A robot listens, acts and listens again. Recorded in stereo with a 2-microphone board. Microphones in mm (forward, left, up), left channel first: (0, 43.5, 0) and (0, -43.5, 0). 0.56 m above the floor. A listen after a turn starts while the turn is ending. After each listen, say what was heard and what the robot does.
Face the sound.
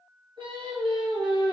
Turn 90° right.
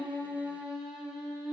So it is at 10° right. Turn 10° right.
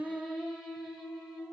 Found it: singing, straight ahead, 2 to 4 m away.